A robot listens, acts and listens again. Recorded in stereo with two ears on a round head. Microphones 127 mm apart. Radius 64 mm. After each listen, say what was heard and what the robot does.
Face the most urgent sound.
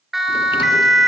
Turn 30° left.
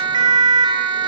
So it is at 35° right. Turn 35° right.
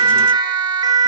The siren is now 30° right. Turn 30° right.
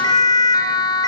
The siren is now 25° left. Turn 25° left.
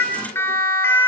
The siren is now 15° left. Turn 15° left.
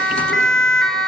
Facing the siren.